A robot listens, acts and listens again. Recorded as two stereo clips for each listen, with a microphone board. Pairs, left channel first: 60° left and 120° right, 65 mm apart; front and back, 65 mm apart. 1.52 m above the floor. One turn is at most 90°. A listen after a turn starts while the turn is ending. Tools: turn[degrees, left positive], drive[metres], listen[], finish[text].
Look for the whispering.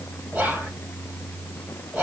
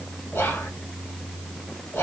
Thought: The whispering: 50° right.
Action: turn[-50]
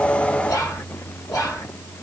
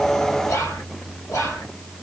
Thought: The whispering is now 35° left.
Action: turn[35]
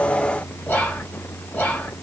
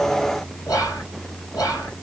Action: finish[Found it: whispering, straight ahead.]